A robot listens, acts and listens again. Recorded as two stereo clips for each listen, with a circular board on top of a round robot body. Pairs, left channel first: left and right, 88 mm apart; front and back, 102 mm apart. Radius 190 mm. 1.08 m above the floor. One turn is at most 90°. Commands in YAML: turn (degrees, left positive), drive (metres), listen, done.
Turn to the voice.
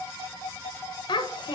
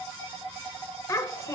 turn: 60
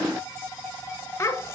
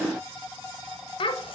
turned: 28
turn: 30
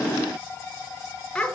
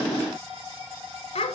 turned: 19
turn: 10
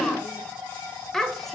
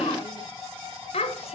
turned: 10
done: "Facing the child speaking, 1 to 2 m away."